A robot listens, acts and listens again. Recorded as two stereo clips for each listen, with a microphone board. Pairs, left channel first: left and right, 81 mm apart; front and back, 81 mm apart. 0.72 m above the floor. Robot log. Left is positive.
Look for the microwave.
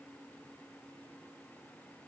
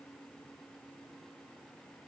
cmd idle
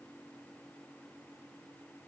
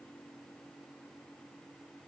cmd idle
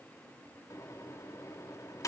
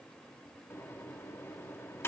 note: The microwave: 55° left.
cmd yaw +55
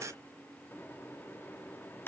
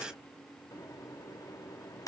note: The microwave is now 35° left.
cmd yaw +35
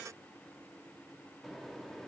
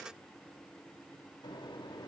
end: Facing the microwave.